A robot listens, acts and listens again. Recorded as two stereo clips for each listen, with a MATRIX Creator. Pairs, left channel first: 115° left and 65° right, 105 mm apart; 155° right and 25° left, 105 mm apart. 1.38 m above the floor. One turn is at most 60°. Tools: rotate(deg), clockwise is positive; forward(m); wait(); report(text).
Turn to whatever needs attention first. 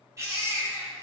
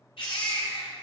rotate(60)
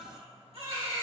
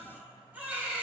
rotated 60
rotate(50)
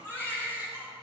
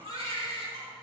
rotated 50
report("Facing the baby crying.")